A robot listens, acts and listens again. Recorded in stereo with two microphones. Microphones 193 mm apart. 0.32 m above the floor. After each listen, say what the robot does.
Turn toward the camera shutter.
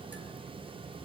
Keep listening.
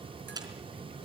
Turn 20° right.
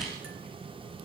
Keep listening.
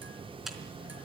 Facing the camera shutter.